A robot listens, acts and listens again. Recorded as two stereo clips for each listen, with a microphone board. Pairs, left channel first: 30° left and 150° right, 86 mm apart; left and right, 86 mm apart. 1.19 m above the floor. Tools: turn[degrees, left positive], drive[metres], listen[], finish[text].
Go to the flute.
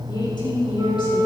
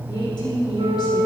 Thought: The flute: 105° right.
Action: turn[-105]
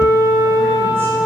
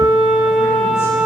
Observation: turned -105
Thought: The flute is now 15° right.
Action: turn[-15]
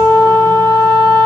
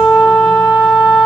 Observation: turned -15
Action: drive[1.0]
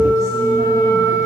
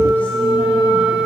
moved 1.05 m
Thought: The flute is now 10° right.
Action: turn[-10]
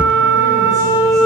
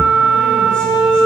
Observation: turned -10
Action: drive[1.0]
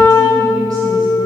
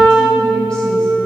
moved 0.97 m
Action: drive[1.0]
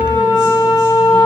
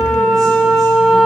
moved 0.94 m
Action: drive[1.0]
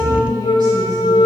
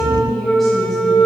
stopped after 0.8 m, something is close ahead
Thought: The flute is now 10° left.
Action: turn[10]
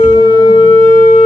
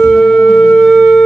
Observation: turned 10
Action: finish[I am next to the flute.]